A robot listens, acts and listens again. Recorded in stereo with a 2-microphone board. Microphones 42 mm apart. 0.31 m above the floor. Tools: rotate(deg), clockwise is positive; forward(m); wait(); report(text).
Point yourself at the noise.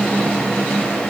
wait()
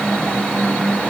wait()
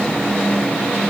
report("I can't make out anything to turn to.")